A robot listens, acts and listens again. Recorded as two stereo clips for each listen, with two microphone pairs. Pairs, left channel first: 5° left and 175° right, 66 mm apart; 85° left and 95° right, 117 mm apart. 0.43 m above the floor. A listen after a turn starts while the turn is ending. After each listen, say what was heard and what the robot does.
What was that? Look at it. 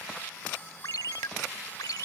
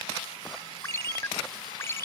The ringtone: 20° left. Turn 20° left.
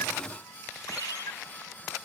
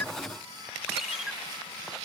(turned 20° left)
Facing the ringtone.